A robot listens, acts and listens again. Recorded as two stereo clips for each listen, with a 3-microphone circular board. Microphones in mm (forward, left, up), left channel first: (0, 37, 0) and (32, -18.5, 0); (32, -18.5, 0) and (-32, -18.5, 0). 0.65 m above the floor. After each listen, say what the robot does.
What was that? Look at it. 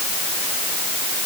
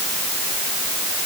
Keep listening.
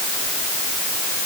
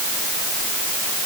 Keep listening.
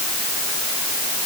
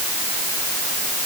I can't make out anything to turn to.